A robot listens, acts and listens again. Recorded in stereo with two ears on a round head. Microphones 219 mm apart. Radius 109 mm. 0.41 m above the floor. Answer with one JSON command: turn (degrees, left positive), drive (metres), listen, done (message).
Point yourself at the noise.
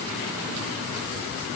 {"listen": true}
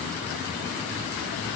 {"listen": true}
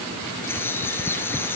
{"turn": 30}
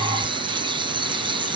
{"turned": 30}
{"turn": -20}
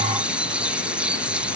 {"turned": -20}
{"done": "Found it: a bird, straight ahead."}